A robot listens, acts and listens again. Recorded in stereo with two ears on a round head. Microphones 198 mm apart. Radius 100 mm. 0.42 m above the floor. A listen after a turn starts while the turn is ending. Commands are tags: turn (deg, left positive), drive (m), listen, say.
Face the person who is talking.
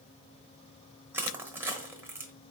<listen/>
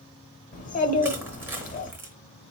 <turn deg="35"/>
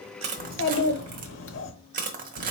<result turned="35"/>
<turn deg="105"/>
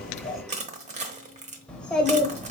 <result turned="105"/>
<say>Facing the child speaking.</say>